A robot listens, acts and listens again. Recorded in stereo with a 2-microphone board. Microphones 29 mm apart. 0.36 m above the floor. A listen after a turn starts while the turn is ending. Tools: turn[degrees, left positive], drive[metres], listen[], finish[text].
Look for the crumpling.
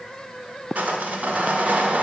Action: listen[]
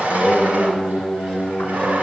Action: listen[]
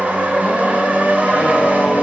Action: finish[I can't make out crumpling to turn to.]